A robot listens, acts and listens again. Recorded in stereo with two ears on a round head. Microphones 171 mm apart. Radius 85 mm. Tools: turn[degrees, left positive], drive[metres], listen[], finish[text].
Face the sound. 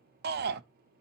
Thought: The shout: about 55° right or 125° right.
Action: turn[-55]
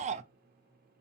Thought: So it is at 45° right.
Action: turn[-45]
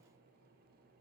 Action: listen[]
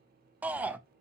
Thought: The shout is now 10° right.
Action: turn[-10]
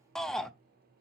Action: finish[Found it: a shout, straight ahead, under 1 m away.]